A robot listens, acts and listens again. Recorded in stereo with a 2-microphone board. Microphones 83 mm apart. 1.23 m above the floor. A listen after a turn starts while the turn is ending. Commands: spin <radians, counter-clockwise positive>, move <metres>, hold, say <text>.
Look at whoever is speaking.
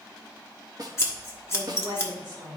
spin -1.22
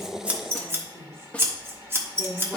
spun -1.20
spin -0.70
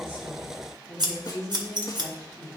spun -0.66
say Found it: a woman speaking, straight ahead.